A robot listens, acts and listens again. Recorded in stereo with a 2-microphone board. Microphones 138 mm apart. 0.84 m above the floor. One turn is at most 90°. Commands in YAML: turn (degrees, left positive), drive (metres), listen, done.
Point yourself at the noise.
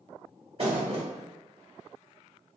turn: -45
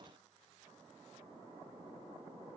listen: true
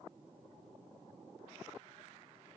done: "I heard a thud, but can't make it out now. It was about straight ahead or 90° right."